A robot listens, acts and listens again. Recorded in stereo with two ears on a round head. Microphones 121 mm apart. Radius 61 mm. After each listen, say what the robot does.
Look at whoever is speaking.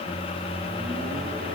Keep listening.
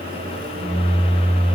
Keep listening.
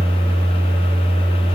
I can't make out anyone speaking, only a microwave.